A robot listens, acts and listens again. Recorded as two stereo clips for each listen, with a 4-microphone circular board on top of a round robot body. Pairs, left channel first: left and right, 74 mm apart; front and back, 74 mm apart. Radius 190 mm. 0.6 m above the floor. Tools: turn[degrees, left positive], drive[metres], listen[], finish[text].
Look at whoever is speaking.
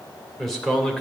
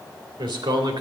Thought: The man speaking: 175° left.
Action: turn[175]
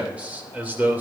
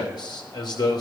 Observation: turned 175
Thought: The man speaking is now 25° right.
Action: turn[-25]
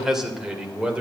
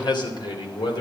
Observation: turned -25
Thought: The man speaking is now 15° right.
Action: turn[-15]
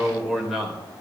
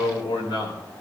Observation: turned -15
Thought: The man speaking is now 10° right.
Action: turn[-10]
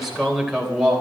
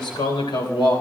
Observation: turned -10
Thought: The man speaking is now 10° right.
Action: turn[-10]
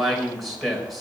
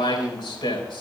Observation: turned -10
Action: finish[Facing the man speaking.]